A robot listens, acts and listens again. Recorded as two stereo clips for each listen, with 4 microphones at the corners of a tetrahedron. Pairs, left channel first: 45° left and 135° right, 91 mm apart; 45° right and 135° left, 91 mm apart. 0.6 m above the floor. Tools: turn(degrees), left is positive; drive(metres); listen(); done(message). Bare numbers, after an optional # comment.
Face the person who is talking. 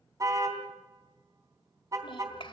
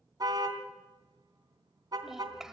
# The child speaking: 50° left.
turn(50)
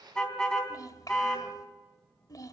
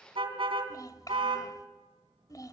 done("Found it: a child speaking, straight ahead, 2 to 4 m away.")